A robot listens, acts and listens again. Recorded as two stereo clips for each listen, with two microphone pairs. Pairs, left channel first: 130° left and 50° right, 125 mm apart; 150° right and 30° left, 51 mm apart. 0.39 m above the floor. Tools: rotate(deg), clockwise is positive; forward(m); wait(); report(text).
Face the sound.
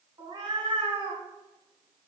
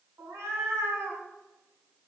report("Found it: a cat meowing, straight ahead.")